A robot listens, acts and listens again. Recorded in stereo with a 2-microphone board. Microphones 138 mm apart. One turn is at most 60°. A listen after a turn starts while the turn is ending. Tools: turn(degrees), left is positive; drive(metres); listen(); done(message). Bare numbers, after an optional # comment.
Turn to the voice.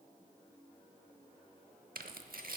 listen()
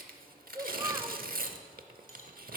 # The child speaking: about 25° right or 155° right.
turn(-25)
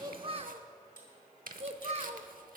# So it is at 130° right.
turn(-60)
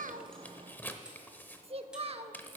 # The child speaking is now 45° right.
turn(-45)
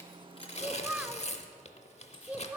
# The child speaking is now 10° right.
turn(-10)
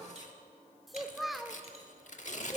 done("Found it: a child speaking, straight ahead.")